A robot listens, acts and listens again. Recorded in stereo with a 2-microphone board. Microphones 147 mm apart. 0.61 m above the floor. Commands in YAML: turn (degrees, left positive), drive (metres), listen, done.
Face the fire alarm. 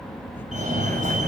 turn: -55
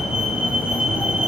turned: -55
done: "Facing the fire alarm, over 4 m away."